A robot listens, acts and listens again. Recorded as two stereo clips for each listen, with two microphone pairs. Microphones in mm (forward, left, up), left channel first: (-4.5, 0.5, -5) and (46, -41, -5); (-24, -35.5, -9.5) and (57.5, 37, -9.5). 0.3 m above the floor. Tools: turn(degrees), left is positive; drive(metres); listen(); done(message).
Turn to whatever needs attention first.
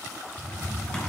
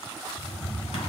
listen()
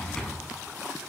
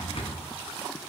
listen()
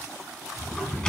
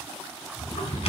done("I can't make out anything urgent, only a drawer.")